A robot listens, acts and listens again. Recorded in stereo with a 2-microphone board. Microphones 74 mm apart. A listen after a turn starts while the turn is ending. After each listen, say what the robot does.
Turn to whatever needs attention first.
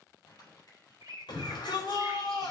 Turn 90° left.
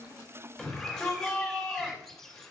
Found it: a shout, straight ahead, over 4 m away.